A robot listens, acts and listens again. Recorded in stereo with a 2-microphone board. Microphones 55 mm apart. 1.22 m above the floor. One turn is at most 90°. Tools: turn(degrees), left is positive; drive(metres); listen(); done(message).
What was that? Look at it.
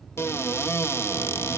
turn(degrees=50)
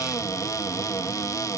turn(degrees=80)
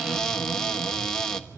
turn(degrees=15)
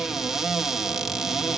done("Facing the cupboard door, 1 to 2 m away.")